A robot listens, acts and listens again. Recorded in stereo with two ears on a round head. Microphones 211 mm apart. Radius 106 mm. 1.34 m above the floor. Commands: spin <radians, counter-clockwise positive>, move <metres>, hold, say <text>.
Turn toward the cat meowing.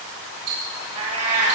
spin -0.52
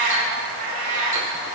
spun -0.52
spin -2.01
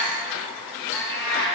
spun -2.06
spin 0.26
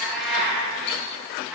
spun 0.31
say Facing the cat meowing, over 4 m away.